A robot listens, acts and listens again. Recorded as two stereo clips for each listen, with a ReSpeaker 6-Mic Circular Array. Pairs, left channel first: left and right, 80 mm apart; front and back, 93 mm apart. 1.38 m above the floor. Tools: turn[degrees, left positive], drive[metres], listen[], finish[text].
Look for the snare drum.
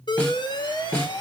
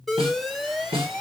Thought: The snare drum: 165° left.
Action: turn[165]
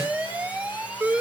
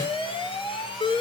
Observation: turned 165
Action: listen[]
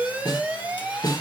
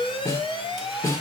Thought: The snare drum is now 60° left.
Action: turn[60]
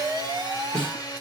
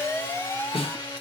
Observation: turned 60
Thought: The snare drum is now 15° left.
Action: turn[15]
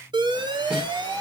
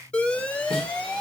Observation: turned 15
Action: listen[]
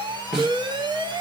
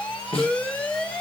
Action: finish[Found it: a snare drum, straight ahead.]